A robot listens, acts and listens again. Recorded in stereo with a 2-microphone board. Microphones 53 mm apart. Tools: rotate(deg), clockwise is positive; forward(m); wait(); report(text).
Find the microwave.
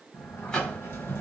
rotate(-30)
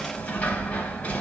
wait()
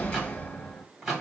rotate(10)
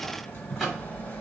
report("Facing the microwave, 1 to 2 m away.")